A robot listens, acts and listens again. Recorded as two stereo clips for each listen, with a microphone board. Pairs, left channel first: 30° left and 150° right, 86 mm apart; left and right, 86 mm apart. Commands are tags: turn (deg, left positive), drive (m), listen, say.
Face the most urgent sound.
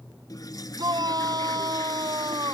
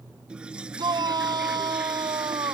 <turn deg="-120"/>
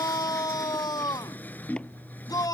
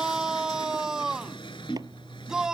<turn deg="-10"/>
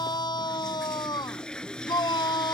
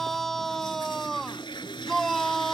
<say>Found it: a shout, straight ahead.</say>